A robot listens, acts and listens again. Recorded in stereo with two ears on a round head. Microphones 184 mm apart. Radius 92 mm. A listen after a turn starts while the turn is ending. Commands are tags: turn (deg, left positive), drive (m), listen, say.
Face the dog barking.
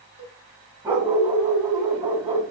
<turn deg="-30"/>
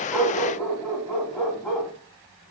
<turn deg="15"/>
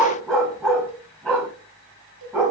<say>Found it: a dog barking, straight ahead, 2 to 4 m away.</say>